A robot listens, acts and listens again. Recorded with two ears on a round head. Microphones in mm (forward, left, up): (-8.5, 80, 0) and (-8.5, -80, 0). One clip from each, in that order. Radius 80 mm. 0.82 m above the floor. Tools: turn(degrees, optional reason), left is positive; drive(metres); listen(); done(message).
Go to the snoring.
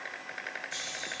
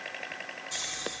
turn(degrees=-40, reason="The snoring: about 40° right or 140° right.")
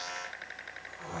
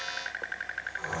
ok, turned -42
turn(degrees=-100, reason="So it is at 100° right.")
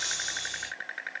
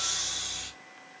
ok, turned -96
drive(metres=1.0)
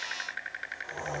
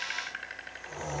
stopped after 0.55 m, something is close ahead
done("Something is in my way. I am facing the snoring but have not reached it.")